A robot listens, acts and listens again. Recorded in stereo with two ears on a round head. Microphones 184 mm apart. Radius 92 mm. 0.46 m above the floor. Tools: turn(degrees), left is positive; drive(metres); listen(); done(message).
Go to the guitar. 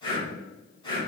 listen()
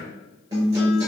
turn(degrees=-15)
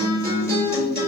turn(degrees=-150)
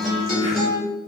drive(metres=1.0)
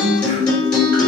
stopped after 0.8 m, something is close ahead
done("Arrived at the guitar, straight ahead.")